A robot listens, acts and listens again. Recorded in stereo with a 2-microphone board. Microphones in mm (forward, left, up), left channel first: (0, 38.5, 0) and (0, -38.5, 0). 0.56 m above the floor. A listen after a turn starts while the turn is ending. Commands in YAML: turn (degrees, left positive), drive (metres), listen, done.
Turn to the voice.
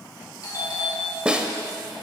listen: true
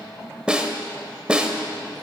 listen: true
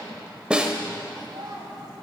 turn: -70
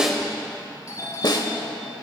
listen: true
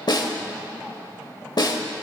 listen: true
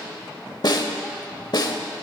done: "I heard a child speaking, but can't make it out now. It was about straight ahead or 40° right."